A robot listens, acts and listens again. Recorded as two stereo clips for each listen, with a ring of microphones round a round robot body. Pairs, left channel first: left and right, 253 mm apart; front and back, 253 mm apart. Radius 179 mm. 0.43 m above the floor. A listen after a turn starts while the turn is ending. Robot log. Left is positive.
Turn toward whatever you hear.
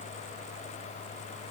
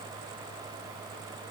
cmd idle
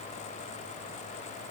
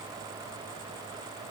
cmd idle
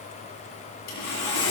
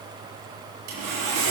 note: The sawing: 135° left.
cmd yaw +135
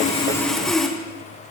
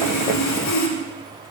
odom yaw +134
end: Facing the sawing.